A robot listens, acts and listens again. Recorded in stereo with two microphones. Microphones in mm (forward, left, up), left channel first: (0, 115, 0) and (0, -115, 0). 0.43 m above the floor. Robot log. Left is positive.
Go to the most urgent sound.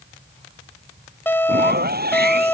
cmd yaw +30
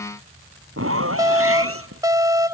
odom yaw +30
note: So it is at 20° right.
cmd yaw -20
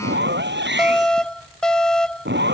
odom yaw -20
cmd fwd 1.0
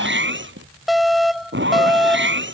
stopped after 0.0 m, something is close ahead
end: Blocked. The alarm is further on, straight ahead.